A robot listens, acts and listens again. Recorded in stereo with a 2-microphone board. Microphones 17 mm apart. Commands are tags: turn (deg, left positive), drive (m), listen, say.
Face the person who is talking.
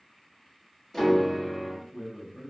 <turn deg="-60"/>
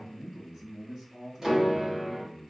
<turn deg="-45"/>
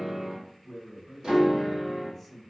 <say>Found it: a man speaking, straight ahead, 1 to 2 m away.</say>